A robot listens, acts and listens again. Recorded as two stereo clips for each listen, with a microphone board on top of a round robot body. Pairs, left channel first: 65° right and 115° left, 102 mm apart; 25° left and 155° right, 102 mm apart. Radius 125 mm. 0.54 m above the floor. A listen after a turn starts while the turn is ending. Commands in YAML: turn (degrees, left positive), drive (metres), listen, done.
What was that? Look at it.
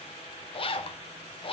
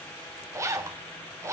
turn: -95
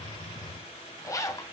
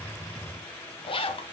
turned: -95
turn: -10
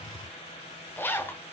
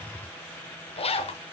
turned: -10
done: "Facing the zipper."